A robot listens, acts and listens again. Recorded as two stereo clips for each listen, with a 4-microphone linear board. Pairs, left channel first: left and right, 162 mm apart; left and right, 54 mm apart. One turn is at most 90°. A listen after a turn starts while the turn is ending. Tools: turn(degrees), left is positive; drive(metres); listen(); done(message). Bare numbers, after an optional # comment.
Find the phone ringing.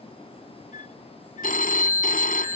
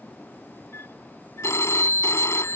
# The phone ringing: about 60° left or 120° left.
turn(60)
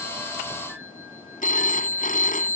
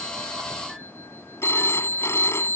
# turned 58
# So it is at 60° left.
turn(60)
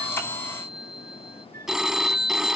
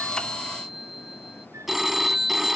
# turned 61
done("Found it: a phone ringing, straight ahead.")